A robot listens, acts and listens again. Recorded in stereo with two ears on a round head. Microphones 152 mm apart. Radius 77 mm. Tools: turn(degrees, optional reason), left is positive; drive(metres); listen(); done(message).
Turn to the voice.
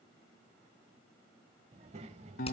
turn(degrees=-40, reason="The child speaking: about 40° right or 140° right.")
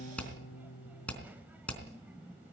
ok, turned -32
turn(degrees=-10, reason="So it is at 10° right.")
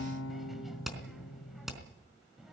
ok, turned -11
done("Facing the child speaking, 1 to 2 m away.")